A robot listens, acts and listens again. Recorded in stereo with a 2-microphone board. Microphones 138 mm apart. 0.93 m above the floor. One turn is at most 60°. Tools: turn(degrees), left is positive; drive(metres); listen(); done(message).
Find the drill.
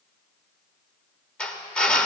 turn(degrees=30)
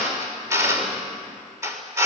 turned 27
turn(degrees=-20)
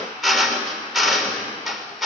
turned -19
done("Facing the drill.")